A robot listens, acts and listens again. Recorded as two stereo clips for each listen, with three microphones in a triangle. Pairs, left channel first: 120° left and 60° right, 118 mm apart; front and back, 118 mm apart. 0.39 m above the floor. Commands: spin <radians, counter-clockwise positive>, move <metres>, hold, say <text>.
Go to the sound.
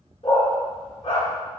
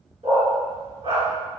spin 2.71
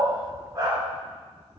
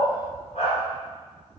move 1.0
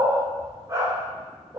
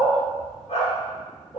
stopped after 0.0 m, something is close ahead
say Something is in my way. I am facing the dog barking but have not reached it.